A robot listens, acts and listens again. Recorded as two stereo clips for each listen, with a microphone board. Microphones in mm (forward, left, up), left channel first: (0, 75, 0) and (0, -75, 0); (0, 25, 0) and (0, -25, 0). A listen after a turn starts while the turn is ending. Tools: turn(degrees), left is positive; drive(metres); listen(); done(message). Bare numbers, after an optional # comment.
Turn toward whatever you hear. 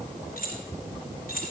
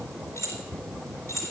turn(90)
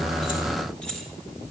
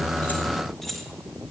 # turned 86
done("Facing the keys jangling, 2 to 4 m away.")